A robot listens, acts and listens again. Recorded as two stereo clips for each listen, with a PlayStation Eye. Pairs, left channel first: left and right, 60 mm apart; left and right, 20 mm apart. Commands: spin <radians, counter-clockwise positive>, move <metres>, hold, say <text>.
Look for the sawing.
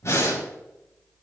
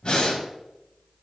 hold
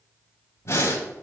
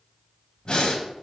hold
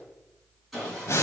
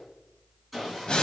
spin 0.52
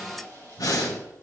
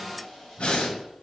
spin 2.62
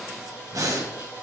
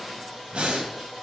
spin -0.44
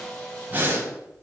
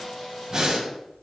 spin 0.26
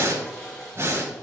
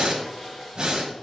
say Facing the sawing, 2 to 4 m away.